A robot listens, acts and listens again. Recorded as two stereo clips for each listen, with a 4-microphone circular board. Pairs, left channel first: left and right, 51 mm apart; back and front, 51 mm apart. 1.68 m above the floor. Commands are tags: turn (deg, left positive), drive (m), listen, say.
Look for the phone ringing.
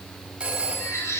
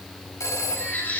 <turn deg="-160"/>
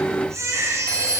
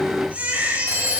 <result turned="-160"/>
<turn deg="15"/>
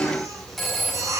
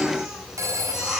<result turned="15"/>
<say>Found it: a phone ringing, straight ahead, over 4 m away.</say>